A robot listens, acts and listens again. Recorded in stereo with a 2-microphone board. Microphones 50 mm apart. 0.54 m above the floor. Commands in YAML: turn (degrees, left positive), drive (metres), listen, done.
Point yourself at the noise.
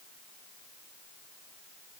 listen: true
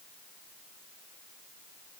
listen: true
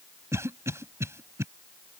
turn: -70
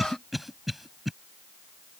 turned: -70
done: "Found it: a cough, straight ahead."